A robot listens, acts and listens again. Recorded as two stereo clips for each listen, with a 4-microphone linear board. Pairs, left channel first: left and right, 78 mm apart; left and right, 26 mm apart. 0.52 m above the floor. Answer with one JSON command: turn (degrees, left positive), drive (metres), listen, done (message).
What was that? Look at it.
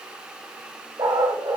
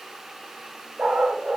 {"turn": -70}
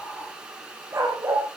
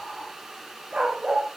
{"turn": -35}
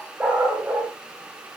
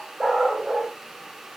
{"turn": -15}
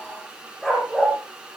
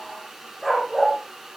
{"turn": 10}
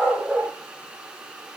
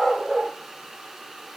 {"done": "Found it: a dog barking, straight ahead, over 4 m away."}